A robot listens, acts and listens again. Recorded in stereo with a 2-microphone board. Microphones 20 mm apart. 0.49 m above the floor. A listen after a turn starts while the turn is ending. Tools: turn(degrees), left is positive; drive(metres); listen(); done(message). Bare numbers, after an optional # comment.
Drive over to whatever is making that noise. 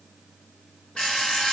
# The alarm clock: about 75° left or 105° left.
turn(75)
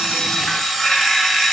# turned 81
drive(1.0)
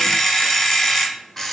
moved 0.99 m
# The alarm clock is now 10° left.
turn(10)
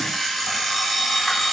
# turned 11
drive(1.0)
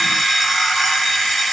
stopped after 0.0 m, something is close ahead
done("Arrived at the alarm clock, straight ahead.")